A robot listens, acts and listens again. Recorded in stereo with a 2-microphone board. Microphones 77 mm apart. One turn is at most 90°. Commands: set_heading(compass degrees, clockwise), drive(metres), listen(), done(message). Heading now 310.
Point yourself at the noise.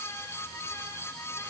listen()
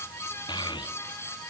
set_heading(220)
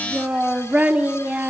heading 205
set_heading(225)
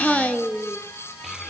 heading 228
done("Found it: a child speaking, straight ahead.")